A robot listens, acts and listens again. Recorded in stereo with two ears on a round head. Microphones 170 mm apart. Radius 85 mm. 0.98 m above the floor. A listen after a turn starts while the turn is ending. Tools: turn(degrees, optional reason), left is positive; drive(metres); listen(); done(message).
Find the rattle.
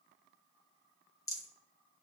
turn(degrees=20, reason="The rattle: about 20° left or 160° left.")
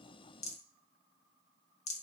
turn(degrees=140, reason="So it is at 140° left.")
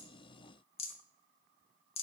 turn(degrees=35, reason="The rattle is now 35° left.")
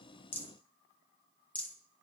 turn(degrees=10, reason="The rattle is now 10° left.")
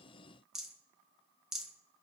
done("Found it: a rattle, straight ahead.")